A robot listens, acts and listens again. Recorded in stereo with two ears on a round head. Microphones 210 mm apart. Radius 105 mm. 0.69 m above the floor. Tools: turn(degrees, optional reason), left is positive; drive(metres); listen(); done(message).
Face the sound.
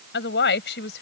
turn(degrees=50, reason="The woman speaking: about 50° left or 130° left.")
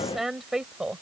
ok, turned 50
done("Facing the woman speaking.")